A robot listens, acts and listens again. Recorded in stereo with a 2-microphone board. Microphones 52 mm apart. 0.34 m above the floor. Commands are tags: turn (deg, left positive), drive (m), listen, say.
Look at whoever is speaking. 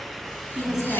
<turn deg="-30"/>
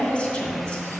<turn deg="25"/>
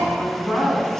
<turn deg="10"/>
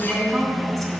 <say>Facing the woman speaking.</say>